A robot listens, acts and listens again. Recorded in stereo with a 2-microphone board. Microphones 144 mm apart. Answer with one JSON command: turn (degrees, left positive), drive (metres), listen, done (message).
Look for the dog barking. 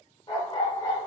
{"turn": 30}
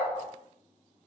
{"turn": 135}
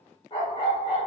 {"turn": 50}
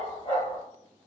{"turn": 40}
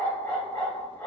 {"turn": 15}
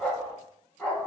{"done": "Facing the dog barking, 1 to 2 m away."}